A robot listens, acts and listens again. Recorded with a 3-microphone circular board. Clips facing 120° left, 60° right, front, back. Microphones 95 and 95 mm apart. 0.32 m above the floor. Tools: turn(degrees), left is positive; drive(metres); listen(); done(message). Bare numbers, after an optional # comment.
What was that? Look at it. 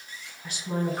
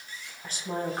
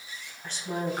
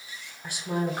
# The woman speaking: 95° right.
turn(-95)
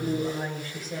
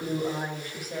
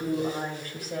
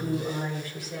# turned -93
# The woman speaking is now 20° left.
turn(20)
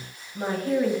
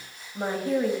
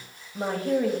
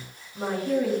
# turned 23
# The woman speaking is now 20° left.
turn(20)
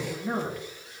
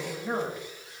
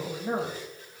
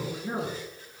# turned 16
# The woman speaking is now 20° left.
turn(20)
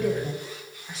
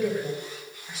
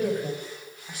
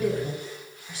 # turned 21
# The woman speaking is now 30° left.
turn(30)
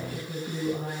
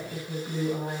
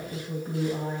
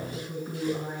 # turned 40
done("Facing the woman speaking.")